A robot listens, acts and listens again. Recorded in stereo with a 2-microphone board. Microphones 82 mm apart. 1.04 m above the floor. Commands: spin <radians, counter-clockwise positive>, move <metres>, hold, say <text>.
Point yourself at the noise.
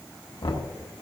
spin 1.57
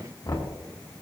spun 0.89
spin 0.87
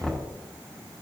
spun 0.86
say Facing the knocking.